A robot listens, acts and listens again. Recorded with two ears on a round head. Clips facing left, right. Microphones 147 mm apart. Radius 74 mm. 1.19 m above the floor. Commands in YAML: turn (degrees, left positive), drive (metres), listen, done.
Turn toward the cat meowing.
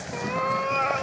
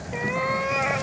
turn: -30
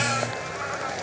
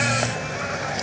listen: true
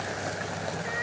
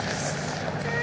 listen: true
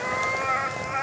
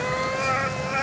turn: -140
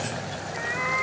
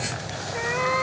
turn: -55
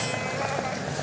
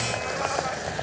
listen: true
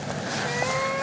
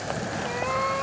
turn: 10
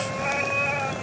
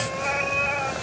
done: "Found it: a cat meowing, straight ahead."